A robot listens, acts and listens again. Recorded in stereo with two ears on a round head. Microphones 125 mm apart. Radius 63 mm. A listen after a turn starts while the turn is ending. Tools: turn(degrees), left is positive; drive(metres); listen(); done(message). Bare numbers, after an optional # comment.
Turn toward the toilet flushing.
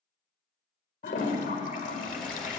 # The toilet flushing: about 60° left or 120° left.
turn(60)
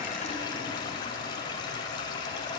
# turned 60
# So it is at 35° left.
turn(35)
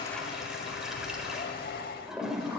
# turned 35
done("Found it: a toilet flushing, straight ahead, 1 to 2 m away.")